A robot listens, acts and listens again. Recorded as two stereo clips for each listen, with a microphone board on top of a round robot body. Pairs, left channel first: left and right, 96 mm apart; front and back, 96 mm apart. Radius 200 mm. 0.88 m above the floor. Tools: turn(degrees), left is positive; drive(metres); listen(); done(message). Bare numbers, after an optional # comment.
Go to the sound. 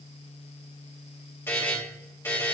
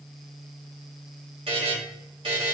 # The buzzer: 155° left.
turn(155)
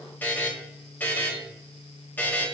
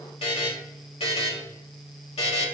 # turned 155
# The buzzer is now 20° left.
turn(20)
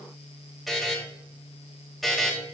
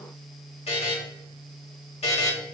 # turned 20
drive(1.0)
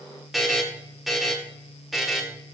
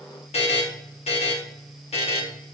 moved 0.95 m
drive(1.0)
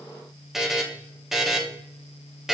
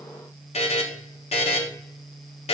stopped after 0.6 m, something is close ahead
done("I am next to the buzzer.")